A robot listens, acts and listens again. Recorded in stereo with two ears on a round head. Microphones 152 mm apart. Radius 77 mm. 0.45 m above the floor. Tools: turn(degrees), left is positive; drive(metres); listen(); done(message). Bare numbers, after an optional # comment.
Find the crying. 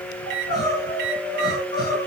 # The crying: about 25° left or 155° left.
turn(25)
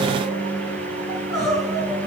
done("Facing the crying.")